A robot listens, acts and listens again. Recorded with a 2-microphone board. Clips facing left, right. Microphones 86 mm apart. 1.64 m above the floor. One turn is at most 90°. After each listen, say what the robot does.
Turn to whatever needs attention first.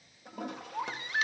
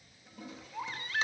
Turn 20° left.
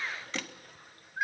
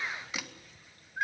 Facing the baby crying.